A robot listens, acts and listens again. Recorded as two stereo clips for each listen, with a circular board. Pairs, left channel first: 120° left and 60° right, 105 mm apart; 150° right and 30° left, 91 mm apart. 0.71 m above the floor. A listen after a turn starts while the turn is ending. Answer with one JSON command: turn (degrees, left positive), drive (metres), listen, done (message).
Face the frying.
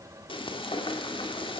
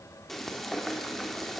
{"turn": 120}
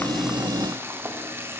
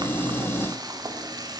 {"done": "Facing the frying, 2 to 4 m away."}